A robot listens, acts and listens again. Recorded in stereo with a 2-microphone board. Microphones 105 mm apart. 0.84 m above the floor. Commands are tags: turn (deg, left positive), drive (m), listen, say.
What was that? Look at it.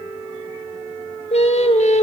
<turn deg="75"/>
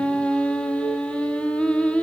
<turn deg="10"/>
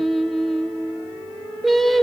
<say>Facing the singing.</say>